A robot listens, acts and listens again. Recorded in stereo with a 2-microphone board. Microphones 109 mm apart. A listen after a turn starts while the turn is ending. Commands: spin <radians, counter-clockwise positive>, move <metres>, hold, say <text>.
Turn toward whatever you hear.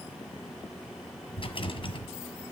spin 0.96
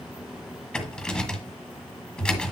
spin 0.17
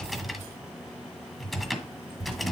say Facing the rattle.